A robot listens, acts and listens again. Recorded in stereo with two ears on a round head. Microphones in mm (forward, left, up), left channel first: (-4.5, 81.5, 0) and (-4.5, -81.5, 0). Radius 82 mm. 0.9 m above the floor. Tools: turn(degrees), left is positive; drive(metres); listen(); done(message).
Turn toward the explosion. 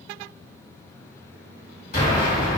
turn(degrees=40)
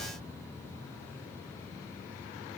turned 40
listen()
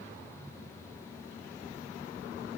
done("I heard an explosion, but can't make it out now. It was about straight ahead or 100° left.")